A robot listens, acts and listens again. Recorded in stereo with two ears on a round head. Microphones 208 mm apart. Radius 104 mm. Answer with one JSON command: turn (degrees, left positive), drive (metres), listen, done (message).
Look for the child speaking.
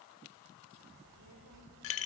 {"turn": -75}
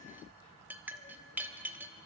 {"turn": 25}
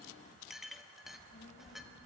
{"turn": 40}
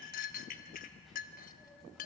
{"done": "Facing the child speaking, 2 to 4 m away."}